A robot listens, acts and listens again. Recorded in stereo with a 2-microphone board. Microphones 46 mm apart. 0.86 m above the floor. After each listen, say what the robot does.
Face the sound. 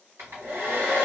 Turn 65° right.
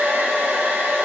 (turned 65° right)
Turn 45° right.
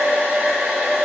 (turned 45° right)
Turn 20° right.
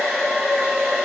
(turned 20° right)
Facing the hair dryer.